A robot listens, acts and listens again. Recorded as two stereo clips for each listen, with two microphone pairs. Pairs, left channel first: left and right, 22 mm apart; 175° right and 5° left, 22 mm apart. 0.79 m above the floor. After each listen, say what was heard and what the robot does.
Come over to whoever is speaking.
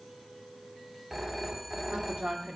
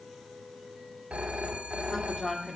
The woman speaking: 105° right. Turn 105° right.
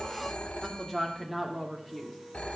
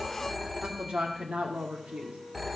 Drive 1.0 m forward.
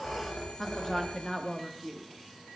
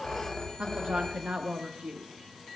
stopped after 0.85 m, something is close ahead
Arrived at the woman speaking, straight ahead.